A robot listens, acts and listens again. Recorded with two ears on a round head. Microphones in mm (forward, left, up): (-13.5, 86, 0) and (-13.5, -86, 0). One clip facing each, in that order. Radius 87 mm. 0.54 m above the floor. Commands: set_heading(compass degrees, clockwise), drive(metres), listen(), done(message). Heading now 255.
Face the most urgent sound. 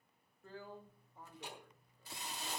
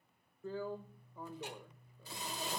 listen()
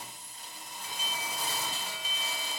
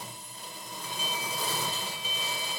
set_heading(210)
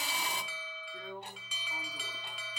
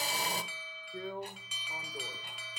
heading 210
set_heading(125)
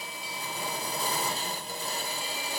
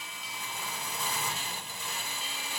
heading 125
listen()
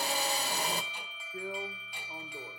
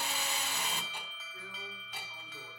set_heading(115)
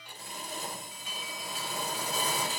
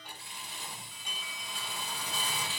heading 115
done("Found it: an alarm, straight ahead.")